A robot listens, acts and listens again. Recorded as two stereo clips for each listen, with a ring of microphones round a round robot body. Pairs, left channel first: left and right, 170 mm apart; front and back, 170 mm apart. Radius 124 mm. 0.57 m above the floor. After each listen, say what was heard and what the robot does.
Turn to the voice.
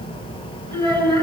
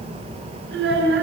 The child speaking: 155° right. Turn 155° right.
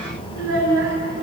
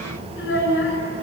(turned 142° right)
The child speaking is now 15° right. Turn 15° right.
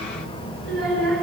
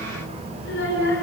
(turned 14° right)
Found it: a child speaking, straight ahead, over 4 m away.